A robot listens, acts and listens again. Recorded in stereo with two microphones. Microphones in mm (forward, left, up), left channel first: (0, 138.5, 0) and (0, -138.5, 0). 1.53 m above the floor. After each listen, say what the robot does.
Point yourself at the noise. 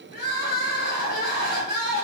Turn 30° left.
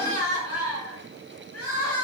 Turn 115° left.
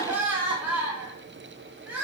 Found it: crying, straight ahead.